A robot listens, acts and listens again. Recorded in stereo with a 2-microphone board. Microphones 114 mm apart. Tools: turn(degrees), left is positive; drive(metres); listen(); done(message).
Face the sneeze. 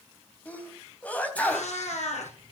turn(degrees=30)
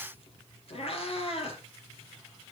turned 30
listen()
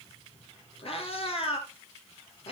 done("I heard a sneeze, but can't make it out now. It was about 20° right or 140° left.")